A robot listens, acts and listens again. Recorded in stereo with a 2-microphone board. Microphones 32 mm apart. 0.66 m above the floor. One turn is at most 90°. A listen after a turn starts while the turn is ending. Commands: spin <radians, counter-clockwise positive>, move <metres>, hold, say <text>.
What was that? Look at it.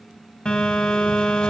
spin 0.52
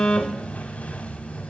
spin 1.57
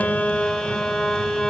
spin 0.61
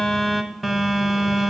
say Found it: a phone buzzing, straight ahead.